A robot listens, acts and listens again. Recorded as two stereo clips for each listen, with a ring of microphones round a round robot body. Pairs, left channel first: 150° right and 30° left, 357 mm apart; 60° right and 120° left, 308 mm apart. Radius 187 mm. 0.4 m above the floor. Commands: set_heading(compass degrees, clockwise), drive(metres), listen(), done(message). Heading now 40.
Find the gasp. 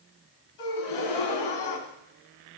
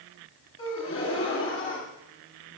set_heading(175)
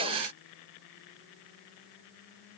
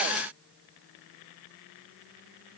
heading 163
set_heading(178)
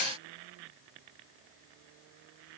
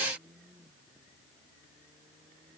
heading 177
done("Facing where the gasp came from. I can't hear it now.")